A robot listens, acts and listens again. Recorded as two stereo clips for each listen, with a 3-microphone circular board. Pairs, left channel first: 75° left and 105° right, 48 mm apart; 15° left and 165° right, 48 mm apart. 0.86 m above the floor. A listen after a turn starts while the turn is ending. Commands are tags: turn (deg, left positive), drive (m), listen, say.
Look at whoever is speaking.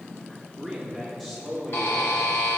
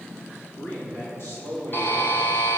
<say>Facing the man speaking.</say>